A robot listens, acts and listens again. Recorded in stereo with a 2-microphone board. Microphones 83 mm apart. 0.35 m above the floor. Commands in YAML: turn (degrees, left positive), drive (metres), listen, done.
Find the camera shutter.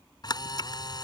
turn: 50
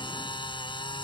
turn: 75
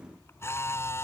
turn: 30
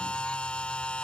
turn: 15
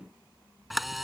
done: "Found it: a camera shutter, straight ahead."